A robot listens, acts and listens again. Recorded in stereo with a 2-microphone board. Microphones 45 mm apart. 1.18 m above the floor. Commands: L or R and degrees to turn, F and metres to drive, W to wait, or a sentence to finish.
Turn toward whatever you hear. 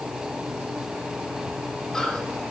L30
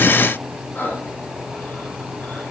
L140
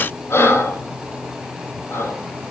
L65
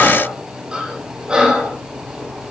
R20
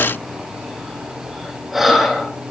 Facing the breathing, over 4 m away.